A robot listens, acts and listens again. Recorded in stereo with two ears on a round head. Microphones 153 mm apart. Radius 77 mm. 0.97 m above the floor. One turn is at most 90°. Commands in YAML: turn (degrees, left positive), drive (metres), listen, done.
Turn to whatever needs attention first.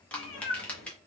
listen: true
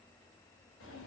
listen: true
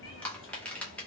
done: "I can't make out anything urgent, only crushing and a cat meowing."